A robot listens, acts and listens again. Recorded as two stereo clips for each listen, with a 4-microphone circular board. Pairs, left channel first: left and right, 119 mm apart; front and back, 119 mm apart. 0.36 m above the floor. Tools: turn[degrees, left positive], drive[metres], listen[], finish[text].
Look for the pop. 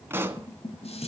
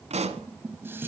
Thought: The pop: 160° right.
Action: turn[-160]
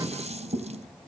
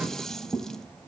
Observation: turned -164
Action: finish[I heard a pop from this way, but can't make it out now.]